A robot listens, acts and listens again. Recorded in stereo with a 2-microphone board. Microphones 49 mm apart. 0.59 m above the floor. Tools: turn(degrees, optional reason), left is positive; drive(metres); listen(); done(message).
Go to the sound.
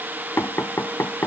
turn(degrees=70, reason="The knocking: about 70° left or 110° left.")
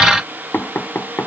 turn(degrees=40, reason="So it is at 40° left.")
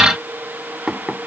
turn(degrees=-10, reason="The knocking is now 10° right.")
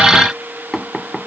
drive(metres=1.0)
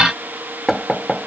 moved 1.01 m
drive(metres=1.0)
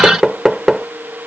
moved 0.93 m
drive(metres=1.0)
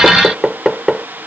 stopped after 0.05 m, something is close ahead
turn(degrees=-10, reason="The knocking is now 10° right.")
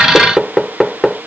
done("I am next to the knocking.")